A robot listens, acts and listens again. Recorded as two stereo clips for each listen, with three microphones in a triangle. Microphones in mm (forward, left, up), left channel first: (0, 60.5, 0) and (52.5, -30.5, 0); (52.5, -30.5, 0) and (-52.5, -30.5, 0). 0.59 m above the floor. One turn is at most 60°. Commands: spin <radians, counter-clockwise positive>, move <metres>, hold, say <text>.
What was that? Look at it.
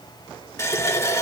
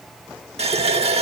spin 1.05
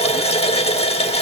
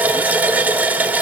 spin 1.05
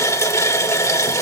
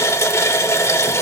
spin 1.05
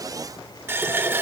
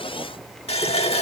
spin 0.17
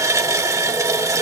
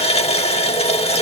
say Facing the running tap.